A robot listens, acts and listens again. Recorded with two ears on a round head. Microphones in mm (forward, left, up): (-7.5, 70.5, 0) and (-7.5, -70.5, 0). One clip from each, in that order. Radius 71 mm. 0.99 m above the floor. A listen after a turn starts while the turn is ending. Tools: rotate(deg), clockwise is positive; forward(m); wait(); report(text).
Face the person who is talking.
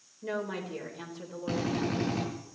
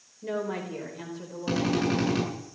rotate(-15)
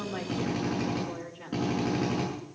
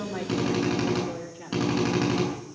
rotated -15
rotate(-15)
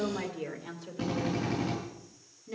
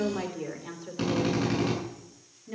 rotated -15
rotate(-20)
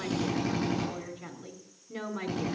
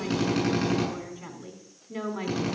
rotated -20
rotate(-30)
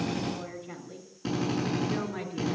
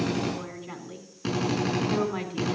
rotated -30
rotate(35)
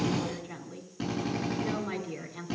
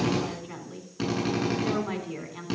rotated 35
rotate(10)
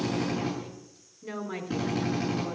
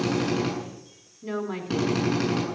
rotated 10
report("Facing the woman speaking.")